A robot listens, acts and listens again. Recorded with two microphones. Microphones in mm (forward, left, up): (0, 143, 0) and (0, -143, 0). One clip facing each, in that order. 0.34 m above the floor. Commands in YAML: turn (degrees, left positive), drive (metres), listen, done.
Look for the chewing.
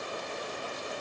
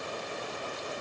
listen: true
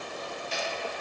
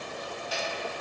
turn: 25
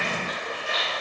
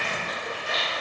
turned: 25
done: "Found it: chewing, straight ahead, 1 to 2 m away."